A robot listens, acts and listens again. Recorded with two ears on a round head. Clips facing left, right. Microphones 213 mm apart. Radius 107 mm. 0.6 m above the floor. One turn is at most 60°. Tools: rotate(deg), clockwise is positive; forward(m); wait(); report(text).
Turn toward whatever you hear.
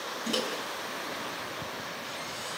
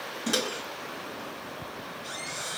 rotate(30)
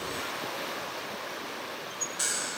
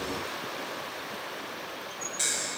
rotate(-15)
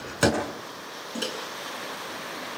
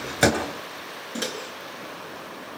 report("Found it: a microwave, straight ahead.")